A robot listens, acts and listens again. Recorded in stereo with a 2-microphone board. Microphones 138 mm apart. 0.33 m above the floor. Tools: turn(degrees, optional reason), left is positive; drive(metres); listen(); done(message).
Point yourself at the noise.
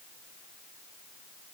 listen()
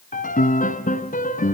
turn(degrees=75, reason="The piano: about 75° left or 105° left.")
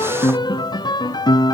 turn(degrees=30, reason="So it is at 30° left.")
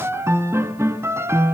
turn(degrees=-20, reason="The piano is now 20° right.")
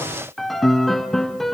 done("Facing the piano, 1 to 2 m away.")